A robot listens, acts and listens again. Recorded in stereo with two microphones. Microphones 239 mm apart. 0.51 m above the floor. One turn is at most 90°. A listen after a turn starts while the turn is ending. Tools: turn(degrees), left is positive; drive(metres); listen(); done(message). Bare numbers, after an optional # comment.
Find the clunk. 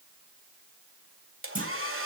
# The clunk: about 35° right or 145° right.
turn(-35)
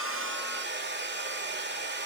listen()
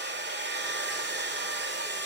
done("I heard a clunk, but can't make it out now. It was about straight ahead or 110° right.")